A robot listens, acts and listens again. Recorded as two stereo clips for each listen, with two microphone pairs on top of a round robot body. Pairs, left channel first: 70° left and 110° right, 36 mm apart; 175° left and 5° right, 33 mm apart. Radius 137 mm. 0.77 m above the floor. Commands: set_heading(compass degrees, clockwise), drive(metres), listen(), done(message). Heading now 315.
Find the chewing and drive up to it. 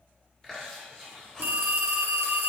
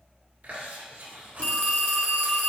drive(1.0)
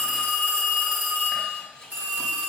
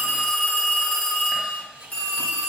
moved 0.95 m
drive(1.0)
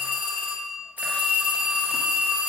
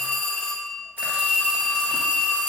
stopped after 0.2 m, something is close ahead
listen()
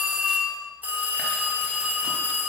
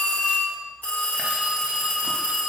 listen()
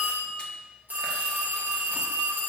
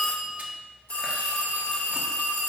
done("I heard chewing from this way, but can't make it out now. I did not reach it.")